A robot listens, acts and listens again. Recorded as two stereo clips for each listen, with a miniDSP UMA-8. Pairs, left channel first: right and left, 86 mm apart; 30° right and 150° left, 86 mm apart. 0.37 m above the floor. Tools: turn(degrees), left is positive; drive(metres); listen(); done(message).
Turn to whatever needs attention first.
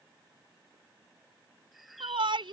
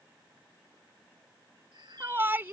turn(degrees=85)
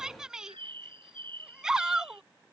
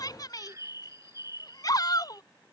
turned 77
done("Facing the shout.")